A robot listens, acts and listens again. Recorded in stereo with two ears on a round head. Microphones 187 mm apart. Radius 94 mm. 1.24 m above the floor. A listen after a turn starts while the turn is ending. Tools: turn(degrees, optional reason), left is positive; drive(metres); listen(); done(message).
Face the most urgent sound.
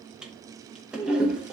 listen()
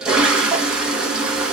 listen()
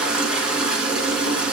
done("I can't make out anything urgent, only a toilet flushing.")